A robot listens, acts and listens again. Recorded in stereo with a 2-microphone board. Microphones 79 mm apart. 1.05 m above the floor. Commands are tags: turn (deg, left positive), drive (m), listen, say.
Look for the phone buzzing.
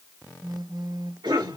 <turn deg="-60"/>
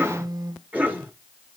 <turn deg="-60"/>
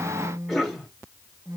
<turn deg="-35"/>
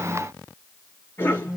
<turn deg="-10"/>
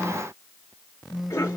<say>Facing the phone buzzing, under 1 m away.</say>